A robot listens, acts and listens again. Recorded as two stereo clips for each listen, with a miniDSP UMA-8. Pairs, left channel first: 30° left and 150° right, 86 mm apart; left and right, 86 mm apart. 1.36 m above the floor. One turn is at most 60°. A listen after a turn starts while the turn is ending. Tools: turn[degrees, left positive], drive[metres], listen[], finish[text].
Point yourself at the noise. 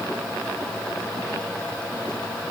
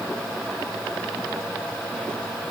Action: listen[]
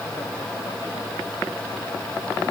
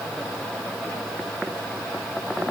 Action: listen[]
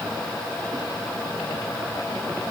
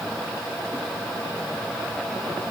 Action: finish[I can't make out anything.]